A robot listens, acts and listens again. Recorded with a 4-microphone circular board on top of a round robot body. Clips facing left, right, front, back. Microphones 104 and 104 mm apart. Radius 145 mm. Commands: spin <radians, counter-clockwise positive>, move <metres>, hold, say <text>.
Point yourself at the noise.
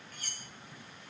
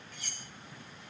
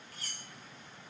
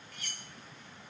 spin 0.87
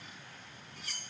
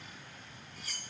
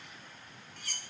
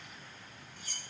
say Found it: cutlery clinking, straight ahead, 1 to 2 m away.